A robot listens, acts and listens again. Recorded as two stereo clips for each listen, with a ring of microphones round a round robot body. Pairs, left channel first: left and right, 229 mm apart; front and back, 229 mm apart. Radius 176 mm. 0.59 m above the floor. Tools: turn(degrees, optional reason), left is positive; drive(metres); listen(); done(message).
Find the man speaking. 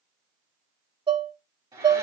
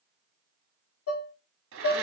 listen()
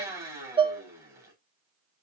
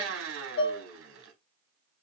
listen()
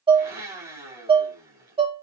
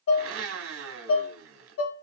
done("I can't make out a man speaking, only dishes clattering and a blender.")